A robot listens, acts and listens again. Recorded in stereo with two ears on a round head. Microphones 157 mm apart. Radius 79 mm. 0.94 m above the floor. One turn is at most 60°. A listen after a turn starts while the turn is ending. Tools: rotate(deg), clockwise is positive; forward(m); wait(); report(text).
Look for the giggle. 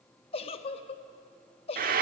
rotate(-35)
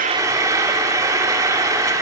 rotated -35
wait()
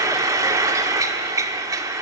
wait()
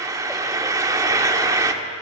report("I heard a giggle, but can't make it out now. It was about straight ahead or 110° left.")